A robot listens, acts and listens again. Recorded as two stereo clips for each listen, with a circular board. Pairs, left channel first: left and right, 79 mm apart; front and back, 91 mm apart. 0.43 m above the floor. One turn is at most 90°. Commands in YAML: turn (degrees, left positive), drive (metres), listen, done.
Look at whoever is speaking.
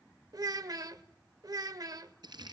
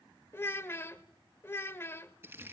turn: -60
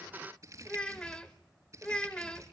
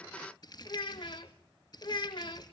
turn: 15
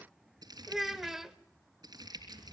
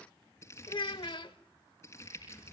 done: "Found it: a child speaking, straight ahead, under 1 m away."